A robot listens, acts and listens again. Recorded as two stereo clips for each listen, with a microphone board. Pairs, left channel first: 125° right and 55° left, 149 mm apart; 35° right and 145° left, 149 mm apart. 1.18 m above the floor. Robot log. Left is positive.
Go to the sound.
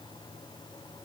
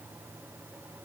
cmd idle
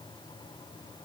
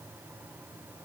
cmd idle
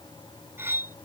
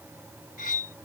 note: The cutlery clinking: 20° right.
cmd yaw -20
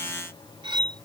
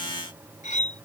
cmd fwd 1.0
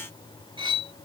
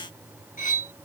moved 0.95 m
cmd fwd 1.0
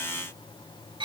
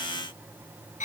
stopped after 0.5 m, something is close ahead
end: I am next to the cutlery clinking.